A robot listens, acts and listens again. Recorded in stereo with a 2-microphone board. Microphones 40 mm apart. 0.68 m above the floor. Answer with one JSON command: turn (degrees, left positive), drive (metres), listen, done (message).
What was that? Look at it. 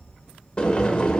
{"turn": 25}
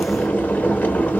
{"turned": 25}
{"turn": 130}
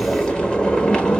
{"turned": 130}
{"turn": 25}
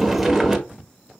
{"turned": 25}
{"done": "Found it: boiling, straight ahead."}